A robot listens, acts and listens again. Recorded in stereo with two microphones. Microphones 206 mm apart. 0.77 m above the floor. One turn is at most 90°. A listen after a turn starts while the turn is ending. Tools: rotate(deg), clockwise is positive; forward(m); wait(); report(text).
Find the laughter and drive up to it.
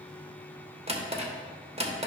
wait()
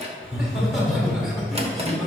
rotate(-30)
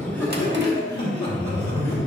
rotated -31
rotate(-90)
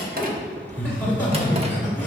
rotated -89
rotate(-60)
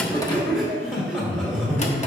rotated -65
forward(1.0)
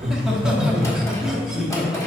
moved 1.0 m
forward(1.0)
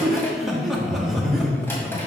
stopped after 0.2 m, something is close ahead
report("I am next to the laughter.")